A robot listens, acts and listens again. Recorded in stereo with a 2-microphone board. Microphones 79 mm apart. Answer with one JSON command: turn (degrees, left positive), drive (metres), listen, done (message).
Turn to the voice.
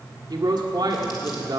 {"turn": -65}
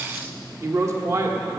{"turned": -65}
{"turn": -45}
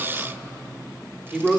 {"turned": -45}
{"turn": -15}
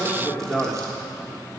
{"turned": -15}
{"done": "Facing the man speaking."}